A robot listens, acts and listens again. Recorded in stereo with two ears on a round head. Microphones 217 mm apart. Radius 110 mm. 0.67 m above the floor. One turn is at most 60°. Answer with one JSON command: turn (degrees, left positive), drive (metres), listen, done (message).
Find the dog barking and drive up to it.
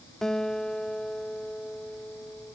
{"listen": true}
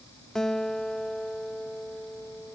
{"listen": true}
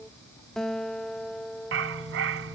{"turn": -55}
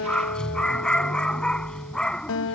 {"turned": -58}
{"drive": 1.0}
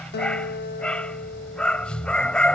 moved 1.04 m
{"drive": 1.0}
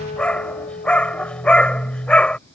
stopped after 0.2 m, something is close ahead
{"done": "Arrived at the dog barking, straight ahead."}